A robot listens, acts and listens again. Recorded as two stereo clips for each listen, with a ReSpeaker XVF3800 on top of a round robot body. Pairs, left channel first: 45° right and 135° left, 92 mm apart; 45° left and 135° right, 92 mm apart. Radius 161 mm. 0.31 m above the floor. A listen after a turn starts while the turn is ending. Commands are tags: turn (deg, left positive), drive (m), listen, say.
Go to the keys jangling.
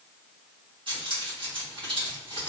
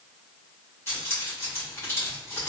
<turn deg="110"/>
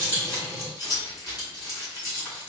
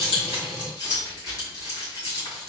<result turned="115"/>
<drive m="1.0"/>
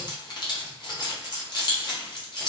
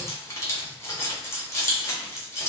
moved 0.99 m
<turn deg="-15"/>
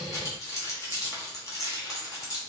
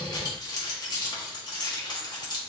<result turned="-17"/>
<drive m="1.0"/>
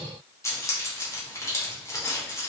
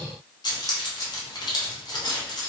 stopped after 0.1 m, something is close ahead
<turn deg="10"/>
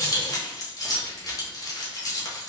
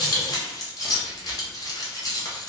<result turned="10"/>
<say>I am next to the keys jangling.</say>